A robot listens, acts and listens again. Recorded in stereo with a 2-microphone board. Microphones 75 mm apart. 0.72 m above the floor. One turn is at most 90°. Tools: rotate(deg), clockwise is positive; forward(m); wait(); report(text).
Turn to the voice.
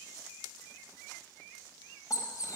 wait()
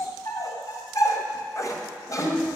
rotate(-45)
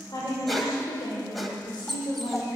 rotate(-90)
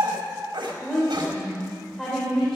report("Facing the woman speaking, 2 to 4 m away.")